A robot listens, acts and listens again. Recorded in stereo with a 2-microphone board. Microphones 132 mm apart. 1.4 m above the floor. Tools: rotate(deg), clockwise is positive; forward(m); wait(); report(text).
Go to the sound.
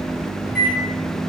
rotate(-30)
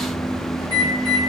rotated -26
rotate(-150)
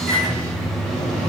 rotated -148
forward(1.0)
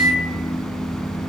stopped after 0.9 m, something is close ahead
report("I am next to the microwave.")